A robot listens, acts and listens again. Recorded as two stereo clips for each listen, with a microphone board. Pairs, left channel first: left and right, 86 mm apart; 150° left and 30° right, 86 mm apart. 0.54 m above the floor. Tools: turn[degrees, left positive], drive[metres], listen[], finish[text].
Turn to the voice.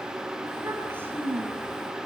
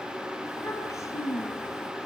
Thought: The child speaking: 155° right.
Action: turn[-155]
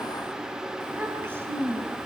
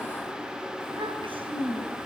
Thought: The child speaking is now 25° right.
Action: turn[-25]
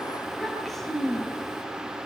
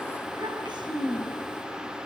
Action: finish[Found it: a child speaking, straight ahead.]